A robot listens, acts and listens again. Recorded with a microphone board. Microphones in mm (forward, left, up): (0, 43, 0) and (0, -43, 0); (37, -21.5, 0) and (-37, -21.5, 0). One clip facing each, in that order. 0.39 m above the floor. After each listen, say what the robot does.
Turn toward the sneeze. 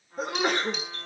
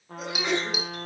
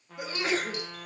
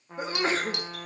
Turn 130° left.
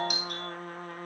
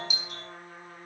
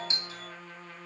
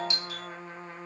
I heard a sneeze from this way, but can't make it out now.